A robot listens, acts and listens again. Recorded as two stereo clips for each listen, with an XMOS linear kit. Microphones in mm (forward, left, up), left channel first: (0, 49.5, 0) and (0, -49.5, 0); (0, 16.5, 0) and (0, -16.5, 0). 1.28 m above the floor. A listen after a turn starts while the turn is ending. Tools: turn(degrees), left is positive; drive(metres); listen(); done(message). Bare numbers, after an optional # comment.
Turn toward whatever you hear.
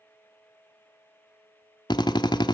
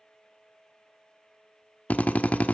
# The drill: about 55° left or 125° left.
turn(55)
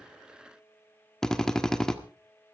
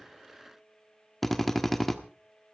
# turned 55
# So it is at 10° left.
turn(10)
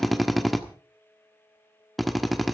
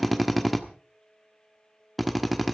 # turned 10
done("Found it: a drill, straight ahead.")